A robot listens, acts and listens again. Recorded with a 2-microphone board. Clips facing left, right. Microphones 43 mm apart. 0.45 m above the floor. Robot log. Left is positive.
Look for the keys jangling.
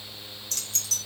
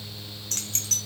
note: The keys jangling: about 50° right or 130° right.
cmd yaw -50
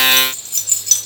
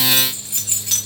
note: So it is at 20° right.
cmd yaw -20
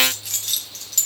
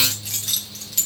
end: Facing the keys jangling, 2 to 4 m away.